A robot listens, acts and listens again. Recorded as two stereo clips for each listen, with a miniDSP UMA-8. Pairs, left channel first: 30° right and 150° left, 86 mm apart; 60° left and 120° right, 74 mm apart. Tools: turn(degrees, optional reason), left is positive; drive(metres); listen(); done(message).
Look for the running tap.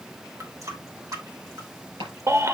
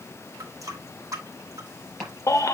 turn(degrees=-160, reason="The running tap: 160° right.")
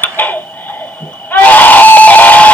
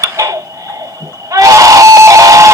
listen()
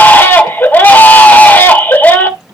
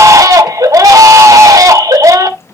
listen()
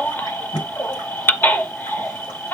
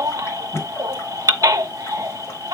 done("I heard a running tap from this way, but can't make it out now.")